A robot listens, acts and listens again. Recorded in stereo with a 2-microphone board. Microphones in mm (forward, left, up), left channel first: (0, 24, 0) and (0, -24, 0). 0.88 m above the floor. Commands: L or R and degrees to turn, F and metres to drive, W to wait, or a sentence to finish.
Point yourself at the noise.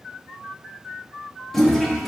L30
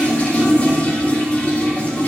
L150
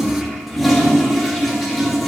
Facing the toilet flushing, 1 to 2 m away.